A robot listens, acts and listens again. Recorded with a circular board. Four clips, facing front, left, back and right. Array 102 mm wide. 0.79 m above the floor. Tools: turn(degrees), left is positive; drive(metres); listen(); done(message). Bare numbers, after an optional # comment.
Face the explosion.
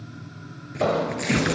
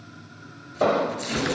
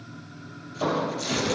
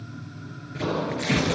# The explosion: 70° left.
turn(70)
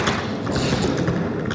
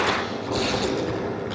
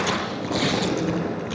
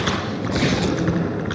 done("Facing where the explosion came from. I can't hear it now.")